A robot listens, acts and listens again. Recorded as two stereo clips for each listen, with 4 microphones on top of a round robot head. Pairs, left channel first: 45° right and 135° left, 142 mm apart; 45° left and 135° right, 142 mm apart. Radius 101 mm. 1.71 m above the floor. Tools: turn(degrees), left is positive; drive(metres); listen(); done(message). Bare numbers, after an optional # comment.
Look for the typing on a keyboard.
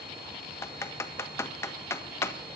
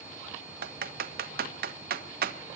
# The typing on a keyboard: 120° right.
turn(-120)
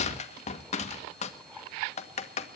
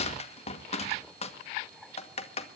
done("Facing the typing on a keyboard, 1 to 2 m away.")